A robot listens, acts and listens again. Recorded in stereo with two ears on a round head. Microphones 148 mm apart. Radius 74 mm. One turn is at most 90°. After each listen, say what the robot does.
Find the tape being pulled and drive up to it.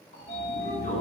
Keep listening.
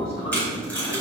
Turn 30° left.
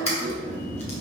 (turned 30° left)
Turn 90° left.
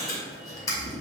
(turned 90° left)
Turn 20° left.
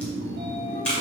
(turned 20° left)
Turn 10° left.
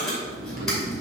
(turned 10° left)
Drive 1.0 m forward.
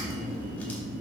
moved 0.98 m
Keep listening.
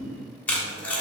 Turn 10° left.
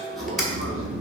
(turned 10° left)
Drive 1.0 m forward.
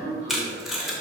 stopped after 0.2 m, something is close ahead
I am next to the tape being pulled.